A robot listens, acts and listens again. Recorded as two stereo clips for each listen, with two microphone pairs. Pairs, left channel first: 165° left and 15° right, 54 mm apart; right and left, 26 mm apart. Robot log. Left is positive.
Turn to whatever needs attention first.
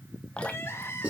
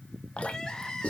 note: The crying: 160° right.
cmd yaw -160
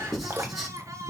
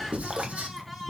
end: Found it: crying, straight ahead.